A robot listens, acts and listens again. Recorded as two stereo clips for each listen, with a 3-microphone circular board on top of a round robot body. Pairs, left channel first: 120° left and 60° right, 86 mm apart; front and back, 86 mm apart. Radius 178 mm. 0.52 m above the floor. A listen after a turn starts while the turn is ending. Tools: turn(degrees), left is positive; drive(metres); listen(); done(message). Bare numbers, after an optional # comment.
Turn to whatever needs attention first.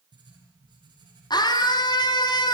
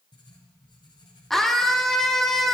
# The scream: 85° left.
turn(85)
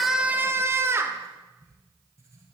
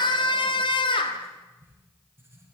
done("Facing the scream.")